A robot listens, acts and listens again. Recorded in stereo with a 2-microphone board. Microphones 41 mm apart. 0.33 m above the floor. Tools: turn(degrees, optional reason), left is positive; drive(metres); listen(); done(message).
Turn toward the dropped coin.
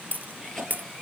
turn(degrees=-50, reason="The dropped coin: about 50° right or 130° right.")
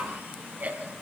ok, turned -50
listen()
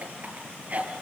done("I heard a dropped coin, but can't make it out now. It was about straight ahead or 80° right.")